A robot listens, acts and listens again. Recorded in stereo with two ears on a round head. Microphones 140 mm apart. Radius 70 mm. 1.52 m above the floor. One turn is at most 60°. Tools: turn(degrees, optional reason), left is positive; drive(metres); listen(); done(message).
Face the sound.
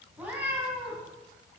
turn(degrees=-30)
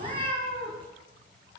turn(degrees=-60, reason="So it is at 135° right.")
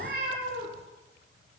turn(degrees=-60, reason="The cat meowing is now 80° right.")
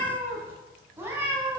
turn(degrees=-15, reason="The cat meowing is now 15° right.")
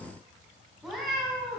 done("Facing the cat meowing.")